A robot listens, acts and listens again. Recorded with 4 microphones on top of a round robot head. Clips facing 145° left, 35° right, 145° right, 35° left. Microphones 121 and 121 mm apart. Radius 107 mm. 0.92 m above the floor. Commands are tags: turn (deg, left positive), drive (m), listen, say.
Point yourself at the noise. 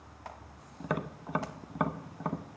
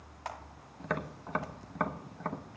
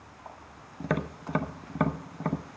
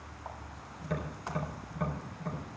<turn deg="-135"/>
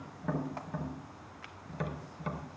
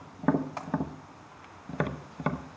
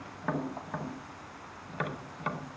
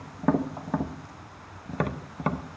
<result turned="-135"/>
<turn deg="-10"/>
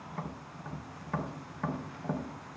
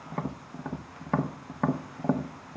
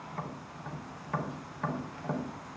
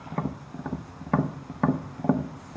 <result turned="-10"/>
<say>Facing the tapping, under 1 m away.</say>